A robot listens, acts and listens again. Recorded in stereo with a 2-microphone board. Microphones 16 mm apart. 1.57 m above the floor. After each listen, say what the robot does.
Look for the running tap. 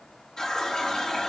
Turn 40° left.
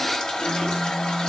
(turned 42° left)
Turn 95° left.
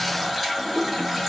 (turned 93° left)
Facing the running tap.